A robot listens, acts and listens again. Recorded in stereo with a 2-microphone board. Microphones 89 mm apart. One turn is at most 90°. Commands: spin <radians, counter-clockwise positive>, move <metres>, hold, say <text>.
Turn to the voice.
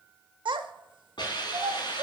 spin -1.22
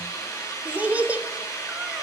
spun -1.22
spin -0.35
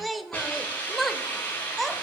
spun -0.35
say Facing the child speaking.